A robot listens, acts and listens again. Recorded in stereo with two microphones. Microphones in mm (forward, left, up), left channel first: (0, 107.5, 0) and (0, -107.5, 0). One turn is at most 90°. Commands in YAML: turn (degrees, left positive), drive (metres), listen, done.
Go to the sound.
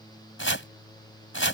turn: 70
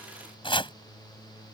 turn: 25
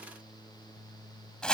drive: 1.0
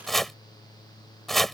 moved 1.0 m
drive: 1.0
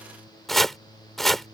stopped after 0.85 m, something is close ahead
done: "I am next to the chopping."